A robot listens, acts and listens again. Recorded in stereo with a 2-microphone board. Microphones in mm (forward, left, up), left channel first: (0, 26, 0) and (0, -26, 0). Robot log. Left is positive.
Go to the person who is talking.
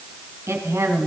note: The woman speaking: about 65° right or 115° right.
cmd yaw -65
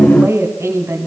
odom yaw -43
note: So it is at 70° right.
cmd yaw -70
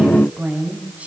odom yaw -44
note: The woman speaking is now 30° right.
cmd yaw -30
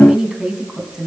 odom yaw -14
note: The woman speaking is now 15° right.
cmd yaw -15
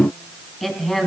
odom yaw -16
cmd fwd 1.0
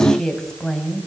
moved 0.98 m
note: The woman speaking is now 10° left.
cmd yaw +10
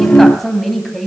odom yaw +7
cmd fwd 1.0
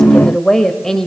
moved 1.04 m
note: The woman speaking is now 10° left.
cmd yaw +10
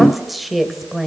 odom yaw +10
cmd fwd 1.0
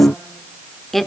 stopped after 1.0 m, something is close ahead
end: Arrived at the woman speaking, straight ahead.